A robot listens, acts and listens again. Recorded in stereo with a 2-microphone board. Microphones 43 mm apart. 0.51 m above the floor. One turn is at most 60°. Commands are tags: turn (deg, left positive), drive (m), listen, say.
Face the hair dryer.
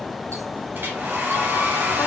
<turn deg="-45"/>
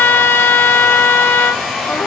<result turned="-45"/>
<say>Facing the hair dryer.</say>